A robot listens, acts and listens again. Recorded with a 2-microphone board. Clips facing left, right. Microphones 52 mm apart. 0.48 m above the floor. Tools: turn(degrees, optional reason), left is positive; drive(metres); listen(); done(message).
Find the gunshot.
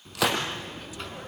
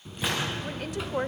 turn(degrees=90)
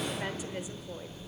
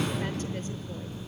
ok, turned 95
done("I heard a gunshot from this way, but can't make it out now.")